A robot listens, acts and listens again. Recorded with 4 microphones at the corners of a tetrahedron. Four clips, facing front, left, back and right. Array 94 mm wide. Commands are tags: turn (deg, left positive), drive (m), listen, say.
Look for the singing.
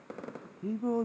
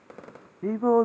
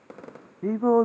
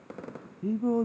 <turn deg="135"/>
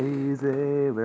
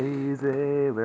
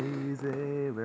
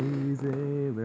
<turn deg="55"/>
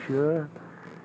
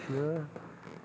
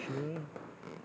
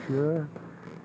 <say>Facing the singing.</say>